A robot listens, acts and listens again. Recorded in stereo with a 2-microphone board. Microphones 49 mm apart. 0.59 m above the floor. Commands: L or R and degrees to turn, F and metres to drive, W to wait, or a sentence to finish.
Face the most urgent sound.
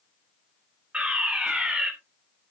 R25
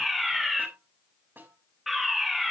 Found it: a fire alarm, straight ahead, 2 to 4 m away.